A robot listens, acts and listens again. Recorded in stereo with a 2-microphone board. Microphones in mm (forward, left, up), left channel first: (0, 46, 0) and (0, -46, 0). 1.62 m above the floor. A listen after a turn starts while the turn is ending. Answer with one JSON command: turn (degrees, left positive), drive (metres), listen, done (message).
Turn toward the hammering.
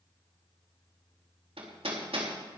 {"turn": -90}
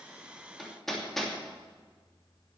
{"done": "Facing the hammering, 2 to 4 m away."}